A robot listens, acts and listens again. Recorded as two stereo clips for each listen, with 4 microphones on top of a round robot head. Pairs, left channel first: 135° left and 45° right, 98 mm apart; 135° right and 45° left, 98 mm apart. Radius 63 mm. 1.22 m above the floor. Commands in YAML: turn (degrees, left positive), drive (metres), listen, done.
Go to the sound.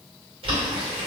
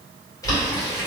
turn: -75
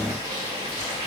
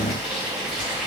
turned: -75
turn: -35
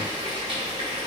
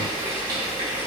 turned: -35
drive: 1.0
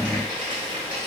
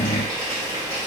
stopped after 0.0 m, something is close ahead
done: "Something is in my way. I am facing the boiling but have not reached it."